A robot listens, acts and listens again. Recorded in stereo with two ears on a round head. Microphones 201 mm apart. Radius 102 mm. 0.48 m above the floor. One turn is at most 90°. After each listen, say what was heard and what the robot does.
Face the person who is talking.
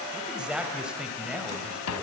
Turn 30° right.
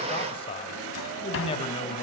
So it is at 30° left. Turn 30° left.
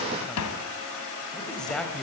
Found it: a man speaking, straight ahead.